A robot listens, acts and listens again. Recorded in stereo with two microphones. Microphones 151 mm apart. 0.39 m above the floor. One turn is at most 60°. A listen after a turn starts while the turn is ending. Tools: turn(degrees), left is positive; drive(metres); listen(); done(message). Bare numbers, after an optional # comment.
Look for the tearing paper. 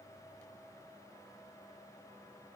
listen()
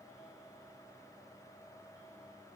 listen()
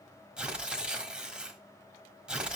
turn(-30)
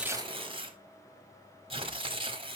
# So it is at 140° right.
turn(-60)
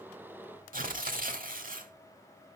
# The tearing paper is now 80° right.
turn(-60)
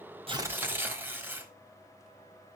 # The tearing paper is now 15° right.
turn(-15)
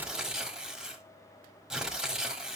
done("Found it: tearing paper, straight ahead, 1 to 2 m away.")